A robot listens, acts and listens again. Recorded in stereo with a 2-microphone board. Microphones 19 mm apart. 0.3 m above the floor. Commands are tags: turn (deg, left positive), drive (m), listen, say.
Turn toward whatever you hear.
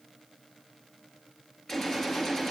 <turn deg="30"/>
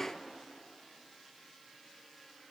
<listen/>
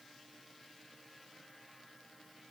<say>I heard a gunshot, but can't make it out now. It was about straight ahead or 120° left.</say>